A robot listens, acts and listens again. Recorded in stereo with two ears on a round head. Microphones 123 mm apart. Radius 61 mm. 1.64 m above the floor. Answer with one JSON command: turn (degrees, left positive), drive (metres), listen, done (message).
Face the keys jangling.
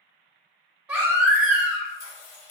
{"turn": 60}
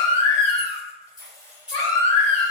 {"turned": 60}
{"done": "Found it: keys jangling, straight ahead."}